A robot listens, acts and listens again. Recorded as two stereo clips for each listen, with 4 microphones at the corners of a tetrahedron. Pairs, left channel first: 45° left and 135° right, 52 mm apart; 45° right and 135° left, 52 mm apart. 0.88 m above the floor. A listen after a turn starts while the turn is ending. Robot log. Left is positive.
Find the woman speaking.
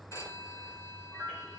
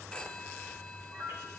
cmd idle
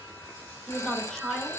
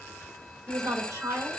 note: The woman speaking: 130° left.
cmd yaw +130
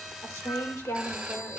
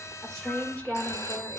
note: The woman speaking is now 25° left.
cmd yaw +25
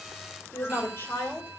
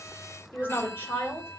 end: Found it: a woman speaking, straight ahead, 2 to 4 m away.